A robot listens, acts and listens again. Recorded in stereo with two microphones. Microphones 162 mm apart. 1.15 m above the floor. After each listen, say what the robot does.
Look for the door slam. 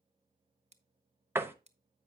Turn 30° right.
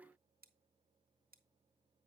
Keep listening.
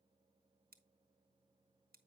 I heard a door slam, but can't make it out now. It was about 15° left or 135° right.